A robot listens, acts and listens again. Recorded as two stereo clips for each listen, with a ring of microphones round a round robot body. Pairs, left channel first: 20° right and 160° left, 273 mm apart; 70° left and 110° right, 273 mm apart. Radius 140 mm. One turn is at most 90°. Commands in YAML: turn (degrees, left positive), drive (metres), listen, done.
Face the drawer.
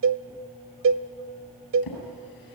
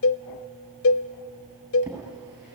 turn: -25
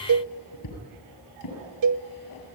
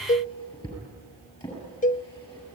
done: "Facing the drawer, over 4 m away."